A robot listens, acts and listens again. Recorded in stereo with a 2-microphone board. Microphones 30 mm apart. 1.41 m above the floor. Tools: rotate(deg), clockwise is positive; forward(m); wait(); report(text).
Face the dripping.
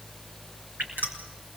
rotate(90)
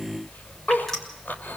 report("Facing the dripping.")